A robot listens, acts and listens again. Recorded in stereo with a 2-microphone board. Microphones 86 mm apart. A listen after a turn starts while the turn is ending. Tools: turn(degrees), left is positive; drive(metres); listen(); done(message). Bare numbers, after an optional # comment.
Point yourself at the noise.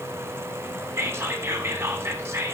# The whispering: about 25° right or 155° right.
turn(-25)
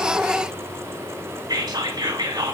# So it is at 130° right.
turn(-130)
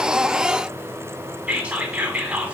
# The whispering is now 20° right.
turn(-20)
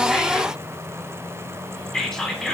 done("Found it: whispering, straight ahead, 2 to 4 m away.")